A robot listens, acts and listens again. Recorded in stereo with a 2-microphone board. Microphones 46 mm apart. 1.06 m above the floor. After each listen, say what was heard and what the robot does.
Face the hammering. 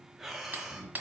The hammering: about 45° right or 135° right. Turn 45° right.
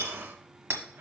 So it is at 80° right. Turn 80° right.
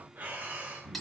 Facing the hammering.